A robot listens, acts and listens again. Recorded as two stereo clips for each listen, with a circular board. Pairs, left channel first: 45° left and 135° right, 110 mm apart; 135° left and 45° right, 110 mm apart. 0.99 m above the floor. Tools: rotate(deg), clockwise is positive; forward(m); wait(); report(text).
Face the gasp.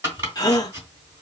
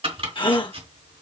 rotate(-95)
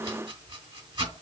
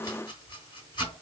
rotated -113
rotate(15)
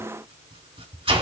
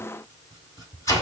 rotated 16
report("Facing where the gasp came from. I can't hear it now.")